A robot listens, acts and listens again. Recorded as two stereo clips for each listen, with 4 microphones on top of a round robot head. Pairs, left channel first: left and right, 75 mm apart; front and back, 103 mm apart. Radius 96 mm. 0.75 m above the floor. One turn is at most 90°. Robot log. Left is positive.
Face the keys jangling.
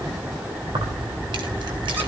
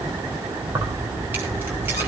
note: The keys jangling: 105° right.
cmd yaw -90
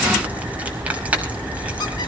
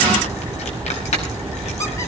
note: The keys jangling is now 20° right.
cmd yaw -20
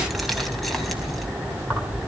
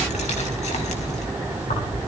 end: Facing the keys jangling, over 4 m away.